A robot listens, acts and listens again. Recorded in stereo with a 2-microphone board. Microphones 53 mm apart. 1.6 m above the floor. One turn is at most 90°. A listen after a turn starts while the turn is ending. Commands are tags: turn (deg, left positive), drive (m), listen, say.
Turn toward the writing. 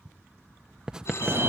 <turn deg="-30"/>
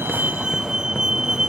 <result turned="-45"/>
<listen/>
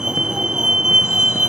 <listen/>
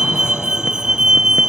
<say>I heard writing, but can't make it out now. It was about 30° left or 120° right.</say>